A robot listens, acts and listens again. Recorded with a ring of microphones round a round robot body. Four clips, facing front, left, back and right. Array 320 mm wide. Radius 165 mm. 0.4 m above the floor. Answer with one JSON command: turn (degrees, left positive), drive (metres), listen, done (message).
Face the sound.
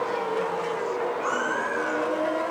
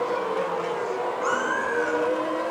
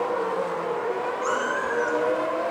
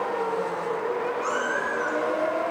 {"turn": 150}
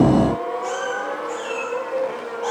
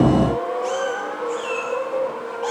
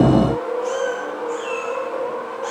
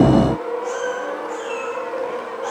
{"turn": 55}
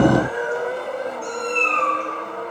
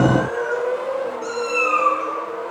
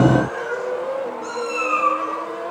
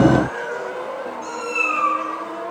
{"turn": 10}
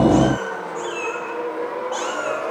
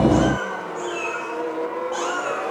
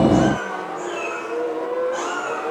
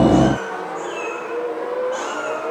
{"done": "Facing the cat meowing, over 4 m away."}